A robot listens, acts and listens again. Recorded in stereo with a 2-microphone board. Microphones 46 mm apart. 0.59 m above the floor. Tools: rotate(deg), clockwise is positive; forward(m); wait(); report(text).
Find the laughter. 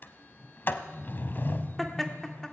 rotate(-15)
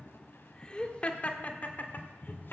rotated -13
rotate(-45)
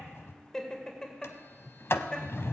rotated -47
rotate(-20)
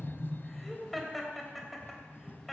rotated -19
report("Facing the laughter.")